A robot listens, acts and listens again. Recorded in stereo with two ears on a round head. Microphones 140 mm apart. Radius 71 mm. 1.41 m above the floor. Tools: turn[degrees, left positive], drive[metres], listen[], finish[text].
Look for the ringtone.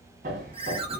Thought: The ringtone: about 35° right or 145° right.
Action: turn[-35]
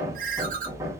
Thought: So it is at 100° right.
Action: turn[-100]
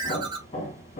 Thought: The ringtone is now 35° right.
Action: turn[-35]
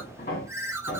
Thought: The ringtone is now 20° right.
Action: turn[-20]
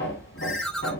Action: finish[Found it: a ringtone, straight ahead, under 1 m away.]